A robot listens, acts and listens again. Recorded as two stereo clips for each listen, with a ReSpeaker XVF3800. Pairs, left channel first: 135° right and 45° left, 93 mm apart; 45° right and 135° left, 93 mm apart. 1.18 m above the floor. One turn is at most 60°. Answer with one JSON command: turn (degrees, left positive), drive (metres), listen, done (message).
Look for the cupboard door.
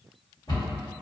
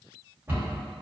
{"turn": -60}
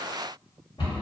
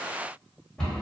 {"turn": -60}
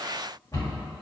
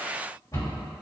{"turn": -60}
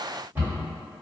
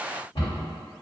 {"turn": -25}
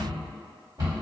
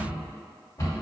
{"done": "Facing the cupboard door."}